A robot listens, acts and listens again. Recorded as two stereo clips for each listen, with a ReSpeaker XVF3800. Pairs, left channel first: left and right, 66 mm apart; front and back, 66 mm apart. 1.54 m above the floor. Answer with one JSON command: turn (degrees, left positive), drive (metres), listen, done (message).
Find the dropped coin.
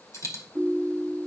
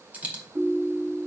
{"turn": 115}
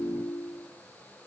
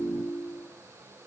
{"done": "Facing where the dropped coin came from. I can't hear it now."}